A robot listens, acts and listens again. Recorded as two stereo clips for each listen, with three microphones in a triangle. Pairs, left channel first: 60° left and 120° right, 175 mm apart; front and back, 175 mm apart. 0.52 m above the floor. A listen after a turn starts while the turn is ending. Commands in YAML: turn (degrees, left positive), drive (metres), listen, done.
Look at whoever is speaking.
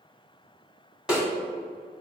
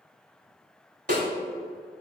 listen: true
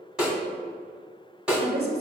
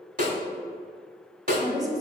turn: -115
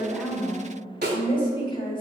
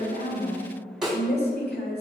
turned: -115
done: "Facing the woman speaking, 1 to 2 m away."